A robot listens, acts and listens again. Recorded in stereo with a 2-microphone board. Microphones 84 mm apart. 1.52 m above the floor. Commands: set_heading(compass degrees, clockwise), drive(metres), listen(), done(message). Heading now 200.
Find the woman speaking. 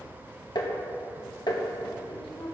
set_heading(110)
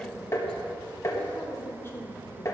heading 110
set_heading(70)
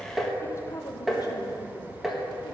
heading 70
set_heading(25)
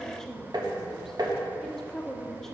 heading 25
done("Facing the woman speaking, 1 to 2 m away.")